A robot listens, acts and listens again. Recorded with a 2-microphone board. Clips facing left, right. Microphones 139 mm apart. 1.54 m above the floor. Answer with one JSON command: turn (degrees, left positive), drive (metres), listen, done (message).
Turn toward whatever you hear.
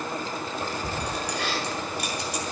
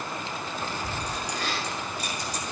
{"turn": 90}
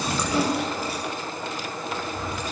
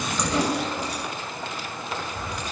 {"done": "Found it: keys jangling, straight ahead, over 4 m away."}